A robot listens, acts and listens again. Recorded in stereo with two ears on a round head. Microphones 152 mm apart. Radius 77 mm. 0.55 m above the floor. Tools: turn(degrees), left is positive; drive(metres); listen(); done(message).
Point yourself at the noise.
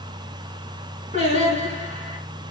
turn(degrees=-45)
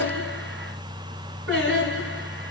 turn(degrees=-90)
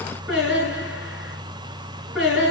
done("Found it: singing, straight ahead.")